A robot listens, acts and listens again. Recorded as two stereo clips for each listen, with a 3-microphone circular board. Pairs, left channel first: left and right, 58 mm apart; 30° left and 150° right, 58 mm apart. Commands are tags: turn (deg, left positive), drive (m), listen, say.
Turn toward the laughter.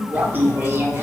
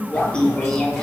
<turn deg="-50"/>
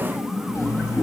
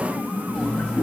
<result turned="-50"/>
<say>Facing the laughter, 2 to 4 m away.</say>